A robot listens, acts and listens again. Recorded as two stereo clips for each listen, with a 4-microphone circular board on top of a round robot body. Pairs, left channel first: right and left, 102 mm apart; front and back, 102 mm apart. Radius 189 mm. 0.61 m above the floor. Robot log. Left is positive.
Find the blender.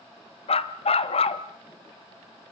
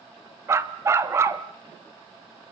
cmd idle
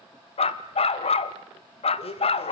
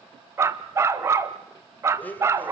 note: The blender: 75° right.
cmd yaw -75
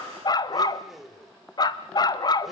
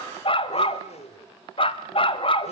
end: Found it: a blender, straight ahead.